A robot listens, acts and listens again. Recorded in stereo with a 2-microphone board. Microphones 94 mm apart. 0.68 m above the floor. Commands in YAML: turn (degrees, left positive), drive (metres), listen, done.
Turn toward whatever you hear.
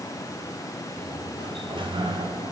turn: -65
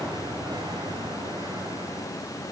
turn: -50
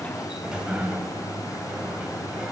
turn: -10
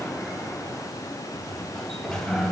done: "Facing the sliding door, 2 to 4 m away."